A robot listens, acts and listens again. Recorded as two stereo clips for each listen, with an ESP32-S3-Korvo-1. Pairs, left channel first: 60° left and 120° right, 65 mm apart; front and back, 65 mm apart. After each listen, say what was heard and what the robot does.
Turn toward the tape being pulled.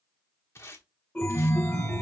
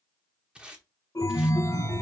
The tape being pulled: 105° left. Turn 105° left.
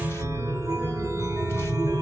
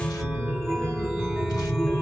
Keep listening.
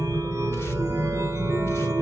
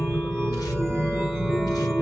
Keep listening.
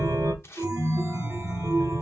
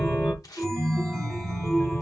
The tape being pulled is now 15° left. Turn 15° left.
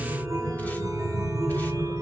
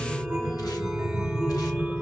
Keep listening.
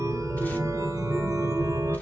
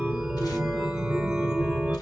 Keep listening.
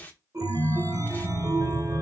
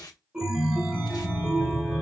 Facing the tape being pulled.